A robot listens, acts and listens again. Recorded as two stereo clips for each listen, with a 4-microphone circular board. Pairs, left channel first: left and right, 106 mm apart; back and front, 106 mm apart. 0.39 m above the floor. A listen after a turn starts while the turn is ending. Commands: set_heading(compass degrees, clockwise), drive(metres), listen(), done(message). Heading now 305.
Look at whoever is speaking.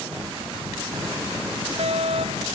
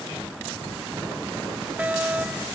listen()
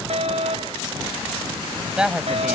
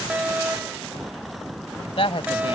set_heading(115)
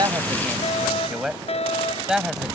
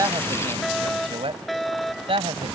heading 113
done("Found it: a woman speaking, straight ahead.")